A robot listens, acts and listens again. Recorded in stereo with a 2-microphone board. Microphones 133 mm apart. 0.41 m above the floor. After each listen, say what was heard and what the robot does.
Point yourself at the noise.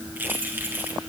Turn 30° right.
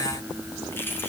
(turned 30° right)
So it is at 15° left. Turn 15° left.
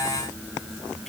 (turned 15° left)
Keep listening.
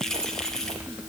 Facing the keys jangling, over 4 m away.